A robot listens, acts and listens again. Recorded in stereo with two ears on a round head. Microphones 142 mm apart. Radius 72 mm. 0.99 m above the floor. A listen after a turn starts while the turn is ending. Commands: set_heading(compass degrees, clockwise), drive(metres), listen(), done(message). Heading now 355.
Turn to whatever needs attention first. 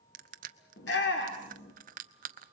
set_heading(265)
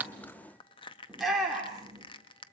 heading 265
done("Facing the shout.")